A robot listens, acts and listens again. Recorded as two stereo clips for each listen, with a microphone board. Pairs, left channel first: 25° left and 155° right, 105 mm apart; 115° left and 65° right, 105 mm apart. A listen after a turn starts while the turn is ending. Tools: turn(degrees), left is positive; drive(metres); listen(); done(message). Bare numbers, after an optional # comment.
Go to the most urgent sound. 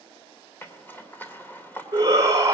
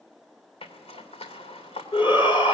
# The shout: 150° left.
turn(150)
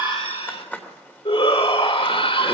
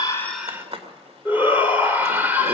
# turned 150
drive(1.0)
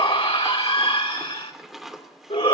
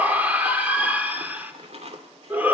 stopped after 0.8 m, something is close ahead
done("Blocked. The shout is further on, straight ahead.")